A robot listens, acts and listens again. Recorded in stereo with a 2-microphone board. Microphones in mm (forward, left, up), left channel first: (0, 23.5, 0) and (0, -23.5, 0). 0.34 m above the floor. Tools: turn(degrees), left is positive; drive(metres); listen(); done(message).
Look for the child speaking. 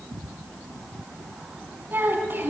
turn(degrees=-45)
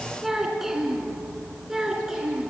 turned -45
turn(degrees=-10)
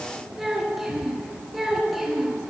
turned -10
done("Found it: a child speaking, straight ahead.")